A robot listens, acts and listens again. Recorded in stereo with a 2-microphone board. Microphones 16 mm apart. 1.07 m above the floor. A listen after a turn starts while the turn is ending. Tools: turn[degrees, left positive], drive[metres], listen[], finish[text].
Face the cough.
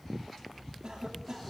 Thought: The cough: about 55° right or 125° right.
Action: turn[-55]
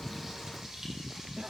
Action: listen[]
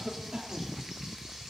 Thought: So it is at 75° right.
Action: turn[-75]
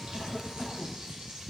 Action: listen[]
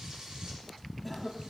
Thought: The cough is now 10° left.
Action: turn[10]
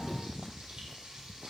Action: listen[]
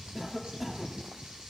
Action: finish[Facing the cough.]